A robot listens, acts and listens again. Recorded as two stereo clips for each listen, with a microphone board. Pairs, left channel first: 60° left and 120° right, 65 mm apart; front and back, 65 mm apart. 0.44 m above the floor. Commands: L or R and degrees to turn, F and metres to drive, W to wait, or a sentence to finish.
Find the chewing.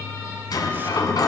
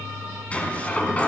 W
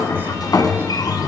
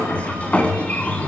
W
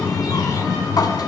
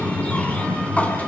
I can't make out chewing to turn to.